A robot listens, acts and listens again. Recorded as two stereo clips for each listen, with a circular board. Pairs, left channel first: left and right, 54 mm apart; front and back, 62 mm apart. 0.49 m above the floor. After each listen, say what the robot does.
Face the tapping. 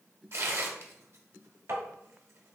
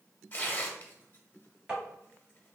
Turn 105° right.
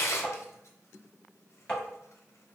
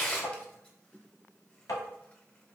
Turn 20° left.
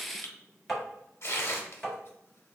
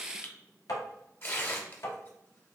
Facing the tapping.